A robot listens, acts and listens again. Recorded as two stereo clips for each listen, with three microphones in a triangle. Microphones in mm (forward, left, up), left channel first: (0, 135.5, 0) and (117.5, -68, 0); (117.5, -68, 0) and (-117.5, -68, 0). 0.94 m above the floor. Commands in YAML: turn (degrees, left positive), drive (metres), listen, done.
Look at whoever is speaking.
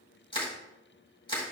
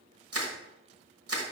listen: true
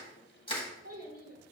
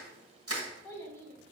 turn: -80
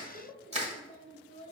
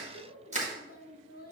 turn: -30
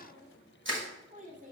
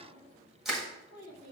done: "Facing the child speaking."